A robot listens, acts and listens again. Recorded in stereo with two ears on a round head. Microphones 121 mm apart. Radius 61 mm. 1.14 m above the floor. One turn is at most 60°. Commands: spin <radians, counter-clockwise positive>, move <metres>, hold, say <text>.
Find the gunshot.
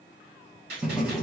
spin -1.05
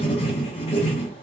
spin -0.52
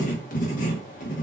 say Facing where the gunshot came from. I can't hear it now.